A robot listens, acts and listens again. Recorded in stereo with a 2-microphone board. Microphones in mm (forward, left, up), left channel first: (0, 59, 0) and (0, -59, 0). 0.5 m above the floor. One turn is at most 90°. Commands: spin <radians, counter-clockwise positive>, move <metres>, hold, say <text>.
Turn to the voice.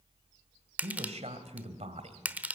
spin -1.22
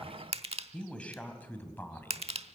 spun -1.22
spin 0.35
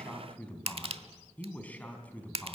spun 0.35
spin 0.26
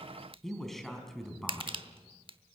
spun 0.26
say Facing the man speaking.